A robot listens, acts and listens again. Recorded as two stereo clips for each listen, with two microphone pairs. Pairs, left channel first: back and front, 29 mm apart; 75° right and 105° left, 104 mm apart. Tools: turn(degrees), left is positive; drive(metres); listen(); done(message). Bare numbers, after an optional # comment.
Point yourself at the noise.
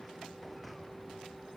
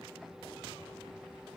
listen()
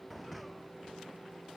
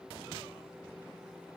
listen()
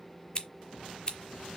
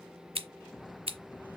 # The scissors: 120° left.
turn(120)
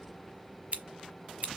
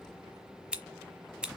# The scissors is now 25° left.
turn(25)
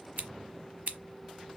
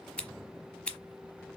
done("Facing the scissors, 1 to 2 m away.")